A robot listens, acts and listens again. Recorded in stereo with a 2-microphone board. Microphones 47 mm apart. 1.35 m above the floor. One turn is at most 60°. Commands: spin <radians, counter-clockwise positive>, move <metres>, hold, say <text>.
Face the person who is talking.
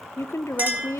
spin 1.05
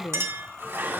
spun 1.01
spin 0.70
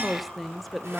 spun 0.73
say Facing the woman speaking.